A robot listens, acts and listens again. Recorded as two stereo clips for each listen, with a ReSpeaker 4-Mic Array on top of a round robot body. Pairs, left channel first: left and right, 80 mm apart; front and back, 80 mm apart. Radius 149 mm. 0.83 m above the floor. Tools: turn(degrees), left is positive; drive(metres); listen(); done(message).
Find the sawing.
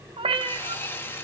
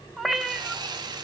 turn(degrees=150)
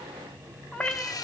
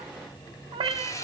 turn(degrees=50)
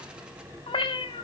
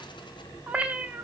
listen()
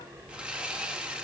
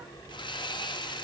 turn(degrees=-10)
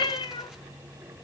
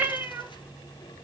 listen()
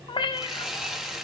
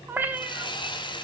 done("Found it: sawing, straight ahead, 1 to 2 m away.")